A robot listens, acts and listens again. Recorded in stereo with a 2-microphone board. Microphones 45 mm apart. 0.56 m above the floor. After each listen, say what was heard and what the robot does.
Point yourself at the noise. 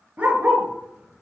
The dog barking: about 25° right or 155° right. Turn 25° right.
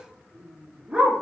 The dog barking: about 20° right or 160° right. Turn 20° right.
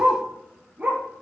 The dog barking: about 30° right or 150° right. Turn 30° right.
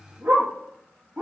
So it is at 130° right. Turn 130° right.
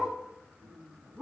Keep listening.
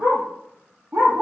The dog barking is now 55° right. Turn 55° right.
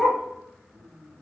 Facing the dog barking.